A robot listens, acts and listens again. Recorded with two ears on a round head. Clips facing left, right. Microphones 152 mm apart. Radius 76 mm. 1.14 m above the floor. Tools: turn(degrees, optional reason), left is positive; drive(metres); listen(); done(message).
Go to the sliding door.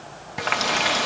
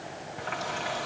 listen()
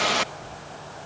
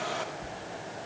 turn(degrees=-50, reason="The sliding door: about 50° right or 130° right.")
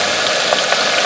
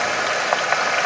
listen()
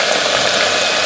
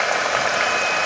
listen()
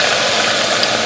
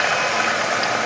done("I heard a sliding door, but can't make it out now. It was about straight ahead or 80° right. I did not reach it.")